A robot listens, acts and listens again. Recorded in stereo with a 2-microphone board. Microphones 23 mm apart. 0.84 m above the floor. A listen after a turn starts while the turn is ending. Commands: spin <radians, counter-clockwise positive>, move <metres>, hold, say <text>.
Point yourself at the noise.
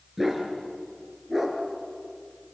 spin -0.52
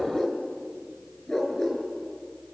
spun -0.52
spin 0.35
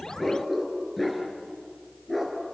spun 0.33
say Found it: a dog barking, straight ahead, over 4 m away.